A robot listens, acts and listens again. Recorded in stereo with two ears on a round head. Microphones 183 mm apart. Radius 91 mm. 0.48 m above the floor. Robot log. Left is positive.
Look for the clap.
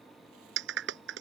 note: The clap: about 60° right or 120° right.
cmd yaw -60
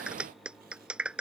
end: Found it: a clap, straight ahead.